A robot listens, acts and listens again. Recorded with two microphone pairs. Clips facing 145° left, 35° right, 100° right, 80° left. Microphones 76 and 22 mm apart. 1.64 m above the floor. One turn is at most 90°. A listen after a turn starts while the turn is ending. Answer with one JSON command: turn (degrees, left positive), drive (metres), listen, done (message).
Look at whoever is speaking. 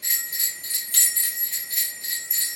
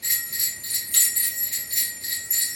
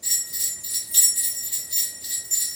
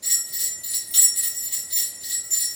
{"listen": true}
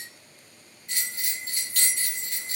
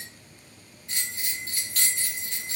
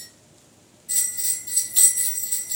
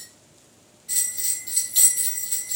{"listen": true}
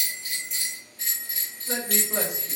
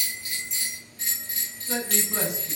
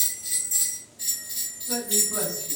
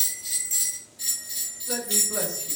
{"turn": 90}
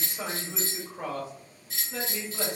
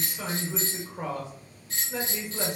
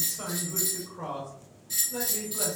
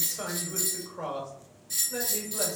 {"turn": 30}
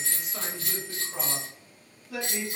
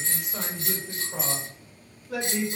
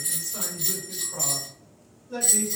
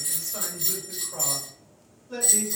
{"done": "Found it: a man speaking, straight ahead, 1 to 2 m away."}